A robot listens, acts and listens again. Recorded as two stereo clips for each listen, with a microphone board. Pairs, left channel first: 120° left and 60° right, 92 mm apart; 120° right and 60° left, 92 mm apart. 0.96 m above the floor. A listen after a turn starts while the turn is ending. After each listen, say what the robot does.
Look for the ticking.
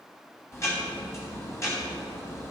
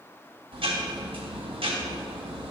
Turn 60° left.
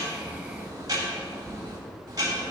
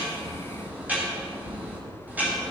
Turn 15° right.
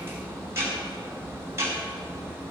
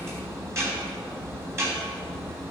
Facing the ticking, 2 to 4 m away.